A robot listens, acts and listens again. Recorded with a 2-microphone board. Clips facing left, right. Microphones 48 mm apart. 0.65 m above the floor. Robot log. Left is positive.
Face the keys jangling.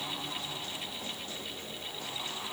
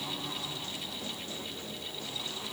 cmd idle
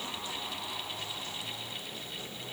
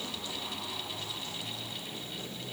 cmd idle
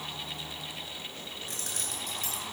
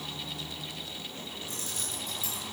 cmd yaw +90
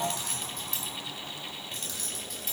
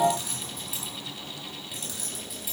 end: Found it: keys jangling, straight ahead.